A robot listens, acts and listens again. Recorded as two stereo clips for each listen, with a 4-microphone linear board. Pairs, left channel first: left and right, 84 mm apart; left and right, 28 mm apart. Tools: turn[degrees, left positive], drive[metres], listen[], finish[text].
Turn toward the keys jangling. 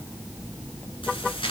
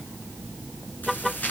Action: turn[90]
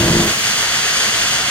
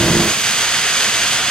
Thought: So it is at 15° left.
Action: turn[15]
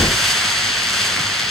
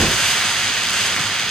Action: finish[Facing the keys jangling.]